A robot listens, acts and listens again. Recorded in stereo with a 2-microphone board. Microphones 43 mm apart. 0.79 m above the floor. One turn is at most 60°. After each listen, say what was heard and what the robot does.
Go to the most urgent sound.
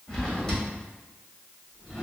Keep listening.
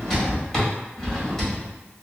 Keep listening.
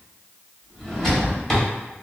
I can't make out anything urgent, only a drawer.